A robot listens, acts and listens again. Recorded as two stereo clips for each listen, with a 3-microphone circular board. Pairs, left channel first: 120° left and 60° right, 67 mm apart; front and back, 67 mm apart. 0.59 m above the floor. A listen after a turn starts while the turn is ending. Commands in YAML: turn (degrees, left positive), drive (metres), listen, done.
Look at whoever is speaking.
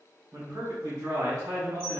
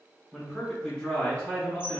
turn: -75
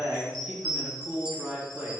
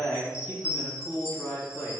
done: "Found it: a man speaking, straight ahead."